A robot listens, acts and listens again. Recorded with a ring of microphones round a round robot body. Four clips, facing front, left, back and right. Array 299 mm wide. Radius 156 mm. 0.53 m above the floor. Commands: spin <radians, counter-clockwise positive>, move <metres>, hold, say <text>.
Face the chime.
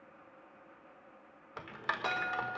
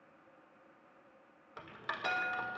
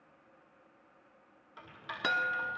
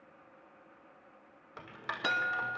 spin -2.44
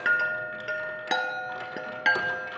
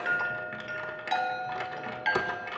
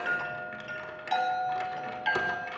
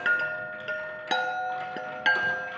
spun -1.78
spin -0.61
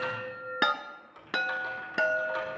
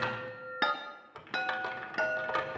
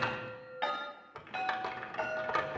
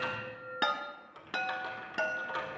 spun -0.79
say Facing the chime, 1 to 2 m away.